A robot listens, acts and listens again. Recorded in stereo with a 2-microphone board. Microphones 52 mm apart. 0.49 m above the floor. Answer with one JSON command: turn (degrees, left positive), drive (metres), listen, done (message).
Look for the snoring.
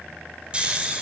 {"turn": -20}
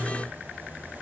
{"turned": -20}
{"listen": true}
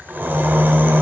{"turn": -140}
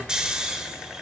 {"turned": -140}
{"turn": -15}
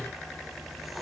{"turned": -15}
{"listen": true}
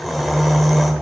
{"done": "Found it: snoring, straight ahead, 1 to 2 m away."}